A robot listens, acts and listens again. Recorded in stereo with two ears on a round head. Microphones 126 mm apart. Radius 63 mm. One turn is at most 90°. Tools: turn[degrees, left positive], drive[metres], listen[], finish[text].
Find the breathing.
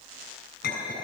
Action: listen[]
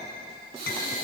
Action: turn[-90]
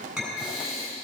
Action: finish[Found it: breathing, straight ahead, over 4 m away.]